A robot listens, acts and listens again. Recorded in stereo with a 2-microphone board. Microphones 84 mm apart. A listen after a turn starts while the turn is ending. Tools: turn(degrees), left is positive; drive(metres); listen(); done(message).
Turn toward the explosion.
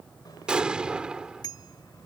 turn(degrees=-30)
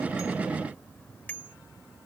listen()
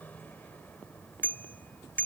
done("I heard an explosion, but can't make it out now. It was about 20° left or 140° right.")